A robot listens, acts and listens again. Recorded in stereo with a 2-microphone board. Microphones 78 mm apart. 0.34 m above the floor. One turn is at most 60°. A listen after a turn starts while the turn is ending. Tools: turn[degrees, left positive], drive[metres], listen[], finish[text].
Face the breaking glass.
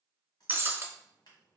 Thought: The breaking glass: about 25° right or 155° right.
Action: turn[-25]
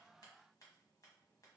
Action: listen[]
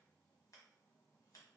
Action: finish[I heard breaking glass, but can't make it out now. It was about straight ahead or 130° right.]